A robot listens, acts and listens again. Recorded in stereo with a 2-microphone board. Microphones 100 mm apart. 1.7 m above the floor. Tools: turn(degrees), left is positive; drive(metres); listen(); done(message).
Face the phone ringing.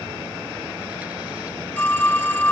turn(degrees=30)
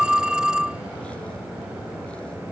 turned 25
turn(degrees=-10)
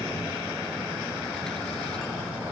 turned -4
listen()
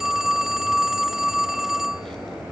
done("Found it: a phone ringing, straight ahead.")